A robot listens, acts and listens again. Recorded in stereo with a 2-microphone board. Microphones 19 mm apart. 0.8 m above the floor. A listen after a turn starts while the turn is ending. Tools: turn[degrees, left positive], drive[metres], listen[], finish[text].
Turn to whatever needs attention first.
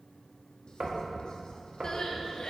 Thought: The crying: about 45° left or 135° left.
Action: turn[45]
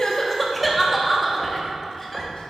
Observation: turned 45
Action: finish[Found it: crying, straight ahead, 1 to 2 m away.]